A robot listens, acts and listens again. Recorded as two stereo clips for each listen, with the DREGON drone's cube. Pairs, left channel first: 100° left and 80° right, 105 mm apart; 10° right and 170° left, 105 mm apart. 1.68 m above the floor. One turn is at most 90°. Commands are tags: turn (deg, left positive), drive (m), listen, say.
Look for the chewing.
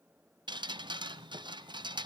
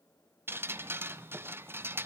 <listen/>
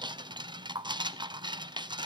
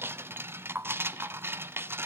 <listen/>
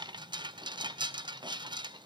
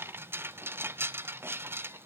<say>I can't make out chewing to turn to.</say>